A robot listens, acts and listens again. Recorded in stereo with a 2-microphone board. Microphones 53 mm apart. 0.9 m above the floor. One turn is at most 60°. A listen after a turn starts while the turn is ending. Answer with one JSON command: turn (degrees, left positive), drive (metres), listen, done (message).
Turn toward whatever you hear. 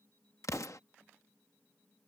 {"turn": 60}
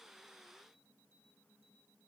{"turn": 30}
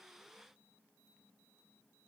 {"done": "Facing where the explosion came from. I can't hear it now."}